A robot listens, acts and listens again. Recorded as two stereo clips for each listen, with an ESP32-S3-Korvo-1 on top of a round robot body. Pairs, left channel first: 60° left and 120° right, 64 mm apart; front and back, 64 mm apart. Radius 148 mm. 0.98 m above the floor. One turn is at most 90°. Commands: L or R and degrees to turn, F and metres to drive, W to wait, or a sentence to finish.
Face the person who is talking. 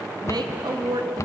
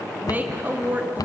R90
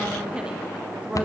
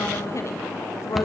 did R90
R45
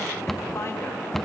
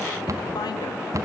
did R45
W
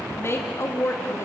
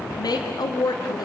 L10
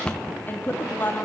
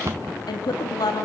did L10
Found it: a woman speaking, straight ahead, 1 to 2 m away.